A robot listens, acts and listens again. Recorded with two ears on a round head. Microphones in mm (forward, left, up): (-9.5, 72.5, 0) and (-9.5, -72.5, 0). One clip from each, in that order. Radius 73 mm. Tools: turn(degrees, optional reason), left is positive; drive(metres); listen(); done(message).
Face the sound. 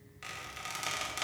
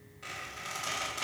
turn(degrees=50, reason="The squeak: about 50° left or 130° left.")
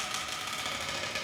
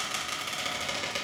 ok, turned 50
done("Found it: a squeak, straight ahead.")